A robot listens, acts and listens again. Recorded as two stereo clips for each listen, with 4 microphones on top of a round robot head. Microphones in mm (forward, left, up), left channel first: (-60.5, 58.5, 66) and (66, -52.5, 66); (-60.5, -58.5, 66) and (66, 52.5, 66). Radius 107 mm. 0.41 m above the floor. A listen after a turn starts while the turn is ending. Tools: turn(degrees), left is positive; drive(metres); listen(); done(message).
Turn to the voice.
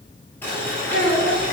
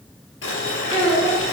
turn(degrees=150)
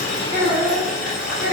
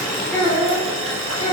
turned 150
turn(degrees=-25)
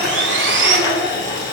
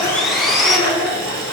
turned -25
listen()
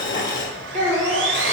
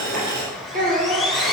done("Facing the child speaking, 2 to 4 m away.")